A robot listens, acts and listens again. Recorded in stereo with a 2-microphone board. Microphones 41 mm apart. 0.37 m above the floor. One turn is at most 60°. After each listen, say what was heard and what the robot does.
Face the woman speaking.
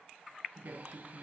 The woman speaking: about 60° right or 120° right. Turn 60° right.
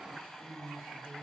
So it is at 45° right. Turn 45° right.
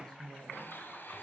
The woman speaking is now 15° left. Turn 15° left.
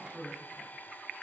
Found it: a woman speaking, straight ahead, over 4 m away.